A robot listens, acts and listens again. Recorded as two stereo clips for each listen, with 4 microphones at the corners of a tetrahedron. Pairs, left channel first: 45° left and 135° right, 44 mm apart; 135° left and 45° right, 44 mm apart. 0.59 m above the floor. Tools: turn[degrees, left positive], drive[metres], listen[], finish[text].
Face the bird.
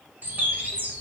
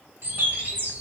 Thought: The bird: 85° right.
Action: turn[-85]
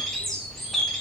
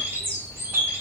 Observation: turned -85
Thought: The bird is now 40° right.
Action: turn[-40]
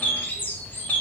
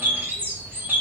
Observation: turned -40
Action: finish[Found it: a bird, straight ahead, 1 to 2 m away.]